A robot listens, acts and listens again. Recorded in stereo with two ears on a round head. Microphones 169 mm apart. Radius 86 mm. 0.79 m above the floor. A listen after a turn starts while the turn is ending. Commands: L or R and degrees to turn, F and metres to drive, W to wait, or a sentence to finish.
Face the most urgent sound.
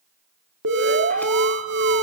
R70
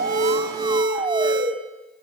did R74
R25
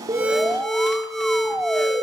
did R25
Facing the alarm, 1 to 2 m away.